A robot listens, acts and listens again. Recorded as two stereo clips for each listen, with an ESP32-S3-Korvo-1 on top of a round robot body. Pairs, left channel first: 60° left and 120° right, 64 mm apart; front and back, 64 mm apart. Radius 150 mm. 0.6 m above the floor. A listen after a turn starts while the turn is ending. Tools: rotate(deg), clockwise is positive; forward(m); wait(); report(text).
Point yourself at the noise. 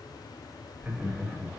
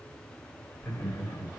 rotate(45)
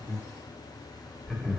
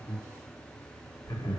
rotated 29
rotate(15)
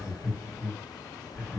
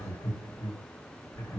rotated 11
report("Found it: laughter, straight ahead.")